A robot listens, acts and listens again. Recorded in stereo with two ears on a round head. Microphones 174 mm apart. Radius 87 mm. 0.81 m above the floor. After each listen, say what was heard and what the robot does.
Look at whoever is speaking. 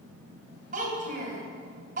The child speaking: about 45° right or 135° right. Turn 45° right.
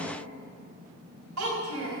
So it is at 90° right. Turn 90° right.
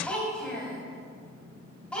Found it: a child speaking, straight ahead.